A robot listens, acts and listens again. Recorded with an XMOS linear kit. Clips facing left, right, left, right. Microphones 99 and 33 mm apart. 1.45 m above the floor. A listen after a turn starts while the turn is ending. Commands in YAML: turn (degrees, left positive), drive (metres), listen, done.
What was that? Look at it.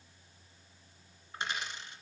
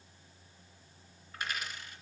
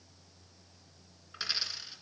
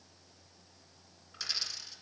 turn: 25
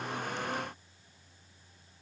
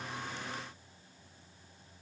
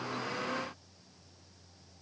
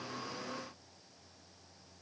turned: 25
listen: true
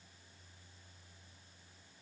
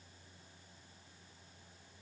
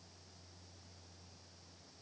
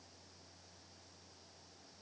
done: "I heard a dropped coin, but can't make it out now. It was about straight ahead or 130° left."